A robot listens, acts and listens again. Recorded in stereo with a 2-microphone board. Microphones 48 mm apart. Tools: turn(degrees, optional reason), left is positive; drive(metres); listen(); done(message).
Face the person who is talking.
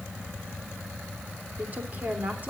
turn(degrees=-35, reason="The woman speaking: about 35° right or 145° right.")
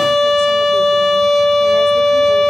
listen()
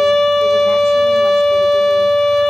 listen()
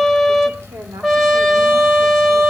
done("I heard a woman speaking, but can't make it out now. It was about straight ahead or 110° right.")